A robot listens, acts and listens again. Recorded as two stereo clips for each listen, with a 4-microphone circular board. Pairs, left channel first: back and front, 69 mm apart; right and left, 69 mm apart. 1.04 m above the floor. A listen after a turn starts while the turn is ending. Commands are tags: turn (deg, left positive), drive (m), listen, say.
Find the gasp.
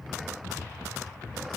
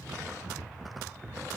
<listen/>
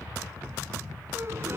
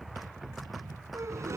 <turn deg="50"/>
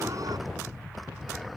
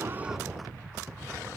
<say>Facing where the gasp came from. I can't hear it now.</say>